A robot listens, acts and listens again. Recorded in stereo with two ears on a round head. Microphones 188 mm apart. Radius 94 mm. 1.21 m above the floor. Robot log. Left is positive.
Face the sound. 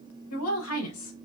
cmd yaw +90
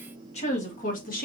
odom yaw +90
note: So it is at 45° left.
cmd yaw +45
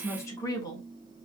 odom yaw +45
note: The woman speaking is now 20° left.
cmd yaw +20
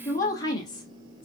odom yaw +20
note: The woman speaking is now 20° left.
cmd yaw +20
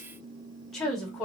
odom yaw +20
end: Found it: a woman speaking, straight ahead, 1 to 2 m away.